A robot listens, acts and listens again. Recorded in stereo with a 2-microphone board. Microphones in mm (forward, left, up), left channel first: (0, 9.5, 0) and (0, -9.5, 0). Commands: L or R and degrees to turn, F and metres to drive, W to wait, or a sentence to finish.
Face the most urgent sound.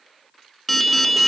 L30
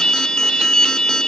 L145
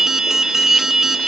R25
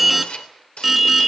Found it: an alarm, straight ahead.